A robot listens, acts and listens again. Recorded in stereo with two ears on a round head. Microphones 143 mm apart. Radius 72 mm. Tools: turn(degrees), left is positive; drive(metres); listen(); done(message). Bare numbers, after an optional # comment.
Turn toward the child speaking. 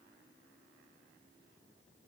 listen()
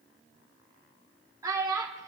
# The child speaking: about 20° right or 160° right.
turn(-20)
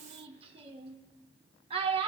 # So it is at 140° right.
turn(-140)
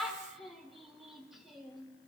done("Facing the child speaking, under 1 m away.")